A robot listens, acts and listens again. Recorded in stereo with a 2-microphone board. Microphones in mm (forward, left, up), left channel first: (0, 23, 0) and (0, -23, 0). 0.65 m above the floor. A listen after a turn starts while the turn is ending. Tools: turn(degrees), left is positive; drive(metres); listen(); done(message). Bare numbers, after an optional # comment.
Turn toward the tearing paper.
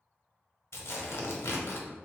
# The tearing paper: about 75° left or 105° left.
turn(75)
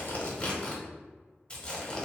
# So it is at 25° left.
turn(25)
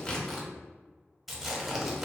done("Facing the tearing paper, under 1 m away.")